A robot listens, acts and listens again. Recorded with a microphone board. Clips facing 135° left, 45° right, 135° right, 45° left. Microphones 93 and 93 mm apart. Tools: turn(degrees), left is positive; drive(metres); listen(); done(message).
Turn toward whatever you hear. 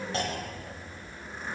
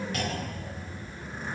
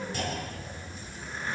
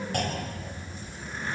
turn(degrees=75)
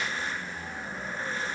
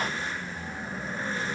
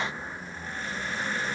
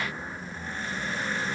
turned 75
done("Facing where the clunk came from. I can't hear it now.")